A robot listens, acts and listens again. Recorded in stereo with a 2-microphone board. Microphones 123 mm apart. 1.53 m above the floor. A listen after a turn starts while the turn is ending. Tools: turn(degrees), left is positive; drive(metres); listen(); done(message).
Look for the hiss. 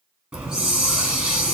turn(degrees=-30)
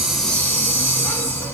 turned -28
turn(degrees=20)
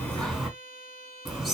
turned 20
done("Facing the hiss, 2 to 4 m away.")